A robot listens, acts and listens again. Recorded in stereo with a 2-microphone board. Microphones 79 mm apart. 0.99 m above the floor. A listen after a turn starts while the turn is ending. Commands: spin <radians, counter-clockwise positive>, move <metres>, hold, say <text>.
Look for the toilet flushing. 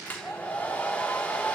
hold
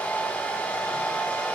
hold
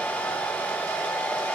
say I can't make out a toilet flushing to turn to.